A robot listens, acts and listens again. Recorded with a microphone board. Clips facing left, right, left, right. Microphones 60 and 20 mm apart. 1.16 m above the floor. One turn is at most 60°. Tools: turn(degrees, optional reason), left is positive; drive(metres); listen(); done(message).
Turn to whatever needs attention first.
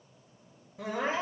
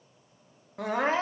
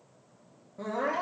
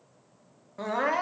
turn(degrees=-60, reason="The crying: about 65° right or 115° right.")
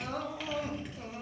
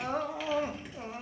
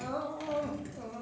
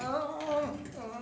turn(degrees=-35, reason="So it is at 35° right.")
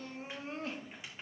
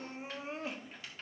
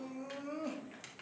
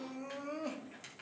turn(degrees=-15, reason="The crying is now 15° right.")
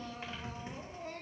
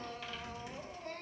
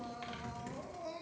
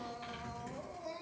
done("Found it: crying, straight ahead, 1 to 2 m away.")